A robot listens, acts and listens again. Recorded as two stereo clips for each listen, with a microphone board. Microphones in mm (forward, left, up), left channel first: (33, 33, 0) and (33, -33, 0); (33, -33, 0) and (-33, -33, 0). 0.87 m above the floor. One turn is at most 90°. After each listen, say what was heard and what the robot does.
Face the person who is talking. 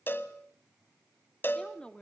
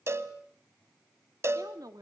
The woman speaking: 160° left. Turn 90° left.
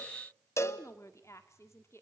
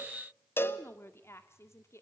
The woman speaking is now 45° left. Turn 45° left.
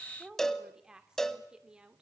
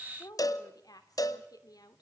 The woman speaking is now 15° right. Turn 15° right.
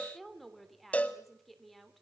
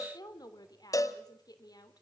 Facing the woman speaking.